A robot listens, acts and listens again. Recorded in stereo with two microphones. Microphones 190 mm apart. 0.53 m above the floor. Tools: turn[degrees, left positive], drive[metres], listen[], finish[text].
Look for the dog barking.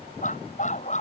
Thought: The dog barking: about 40° left or 140° left.
Action: turn[40]
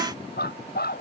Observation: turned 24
Thought: So it is at 125° left.
Action: turn[125]
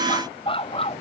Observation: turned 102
Thought: The dog barking is now 30° left.
Action: turn[30]
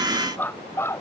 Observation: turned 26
Thought: The dog barking is now 15° left.
Action: turn[15]
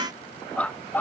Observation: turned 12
Thought: The dog barking is now 10° left.
Action: turn[10]
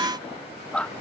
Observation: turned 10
Action: finish[Found it: a dog barking, straight ahead.]